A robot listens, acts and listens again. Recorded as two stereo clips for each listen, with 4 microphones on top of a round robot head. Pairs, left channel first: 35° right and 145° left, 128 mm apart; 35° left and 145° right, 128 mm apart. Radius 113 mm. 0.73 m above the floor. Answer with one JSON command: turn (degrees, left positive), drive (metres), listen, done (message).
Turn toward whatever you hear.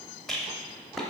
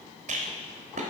{"turn": -120}
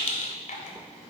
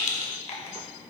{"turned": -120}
{"done": "Facing the rattle, under 1 m away."}